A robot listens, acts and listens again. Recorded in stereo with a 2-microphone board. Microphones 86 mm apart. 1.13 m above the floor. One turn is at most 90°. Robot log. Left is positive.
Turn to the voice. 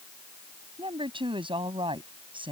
cmd yaw -90
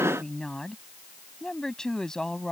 end: Found it: a woman speaking, straight ahead.